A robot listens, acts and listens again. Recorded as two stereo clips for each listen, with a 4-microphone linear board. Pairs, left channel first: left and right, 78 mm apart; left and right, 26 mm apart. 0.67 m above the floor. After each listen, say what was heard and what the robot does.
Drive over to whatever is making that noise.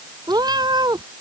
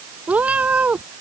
The cat meowing: about 65° right or 115° right. Turn 65° right.
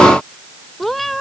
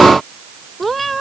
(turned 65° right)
Drive 1.0 m forward.
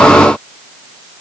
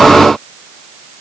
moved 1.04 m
Keep listening.
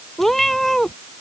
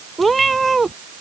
Drive 1.0 m forward.
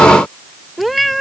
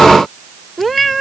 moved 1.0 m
Drive 1.0 m forward.
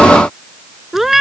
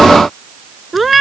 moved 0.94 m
Drive 1.0 m forward.
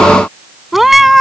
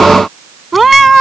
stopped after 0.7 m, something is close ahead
I am next to the cat meowing.